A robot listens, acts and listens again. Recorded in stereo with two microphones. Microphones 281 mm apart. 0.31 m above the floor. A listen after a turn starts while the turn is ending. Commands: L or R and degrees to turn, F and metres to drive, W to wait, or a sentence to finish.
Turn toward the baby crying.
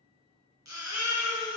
R90
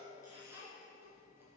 R10
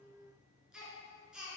Facing the baby crying.